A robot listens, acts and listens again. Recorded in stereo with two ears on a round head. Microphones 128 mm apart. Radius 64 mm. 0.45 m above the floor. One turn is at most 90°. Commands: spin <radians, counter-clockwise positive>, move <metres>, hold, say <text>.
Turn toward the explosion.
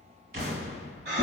spin -1.22
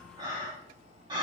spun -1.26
hold
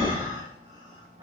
say I heard an explosion, but can't make it out now. It was about straight ahead or 35° right.